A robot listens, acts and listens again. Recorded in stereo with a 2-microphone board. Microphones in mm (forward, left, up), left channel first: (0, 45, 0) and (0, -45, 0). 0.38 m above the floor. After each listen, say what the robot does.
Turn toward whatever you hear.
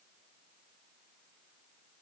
Keep listening.
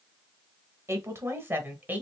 Turn 20° right.
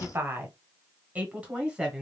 Turn 30° right.
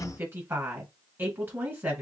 Turn 25° right.
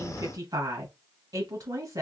Turn 130° right.
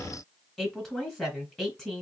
Found it: a woman speaking, straight ahead.